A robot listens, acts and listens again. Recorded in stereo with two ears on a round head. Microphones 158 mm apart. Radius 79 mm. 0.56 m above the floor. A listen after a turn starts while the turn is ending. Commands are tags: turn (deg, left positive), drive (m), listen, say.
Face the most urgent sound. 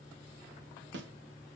<listen/>
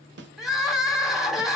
<turn deg="30"/>
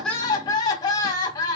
<turn deg="155"/>
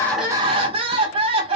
<turn deg="-40"/>
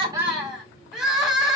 <say>Found it: crying, straight ahead, 1 to 2 m away.</say>